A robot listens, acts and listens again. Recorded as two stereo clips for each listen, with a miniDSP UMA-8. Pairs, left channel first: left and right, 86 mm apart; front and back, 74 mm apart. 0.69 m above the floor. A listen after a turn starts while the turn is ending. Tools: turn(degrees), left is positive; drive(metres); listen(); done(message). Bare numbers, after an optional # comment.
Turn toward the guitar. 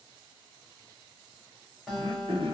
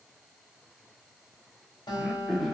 done("Facing the guitar.")